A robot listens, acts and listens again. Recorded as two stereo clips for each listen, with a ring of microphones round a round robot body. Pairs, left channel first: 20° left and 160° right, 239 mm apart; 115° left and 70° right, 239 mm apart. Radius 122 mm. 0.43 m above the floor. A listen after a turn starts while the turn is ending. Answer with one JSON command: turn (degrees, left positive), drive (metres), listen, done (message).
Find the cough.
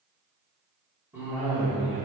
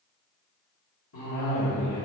{"turn": 120}
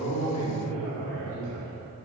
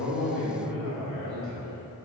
{"done": "Found it: a cough, straight ahead, 2 to 4 m away."}